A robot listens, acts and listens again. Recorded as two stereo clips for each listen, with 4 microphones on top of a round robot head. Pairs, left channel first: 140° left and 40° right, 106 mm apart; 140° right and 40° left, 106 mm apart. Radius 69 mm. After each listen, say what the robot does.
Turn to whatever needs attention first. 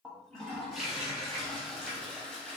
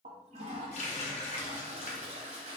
Keep listening.
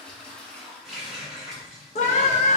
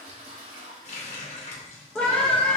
Turn 140° left.
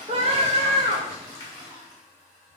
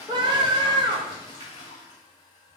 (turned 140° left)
Found it: a scream, straight ahead.